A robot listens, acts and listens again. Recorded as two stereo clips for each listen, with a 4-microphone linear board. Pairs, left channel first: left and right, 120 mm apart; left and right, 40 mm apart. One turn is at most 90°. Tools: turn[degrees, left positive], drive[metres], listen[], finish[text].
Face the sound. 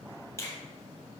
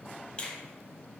Thought: The finger snap: about 25° left or 155° left.
Action: turn[25]
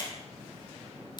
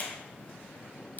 Thought: So it is at 130° left.
Action: turn[90]
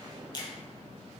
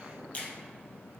Thought: The finger snap is now 45° left.
Action: turn[45]
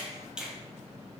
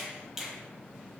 Thought: The finger snap is now 10° right.
Action: turn[-10]
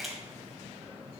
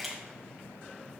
Action: finish[Found it: a finger snap, straight ahead, 1 to 2 m away.]